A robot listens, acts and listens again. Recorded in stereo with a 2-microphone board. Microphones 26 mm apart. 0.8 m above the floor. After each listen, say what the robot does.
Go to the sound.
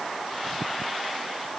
Keep listening.
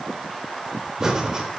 Turn 25° right.
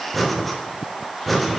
Drive 1.0 m forward.
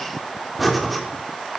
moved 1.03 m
Drive 1.0 m forward.
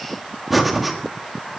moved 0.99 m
Drive 1.0 m forward.
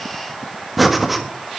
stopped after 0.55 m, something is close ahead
Turn 10° right.
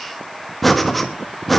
I am next to the breathing.